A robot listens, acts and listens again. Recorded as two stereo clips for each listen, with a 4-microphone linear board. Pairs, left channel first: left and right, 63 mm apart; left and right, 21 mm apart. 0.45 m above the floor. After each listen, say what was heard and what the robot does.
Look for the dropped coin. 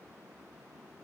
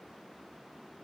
Keep listening.
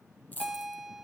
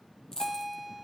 The dropped coin: about 25° left or 155° left. Turn 25° left.
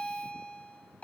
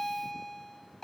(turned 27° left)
Keep listening.
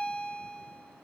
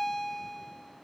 I heard a dropped coin, but can't make it out now. It was about straight ahead or 125° left.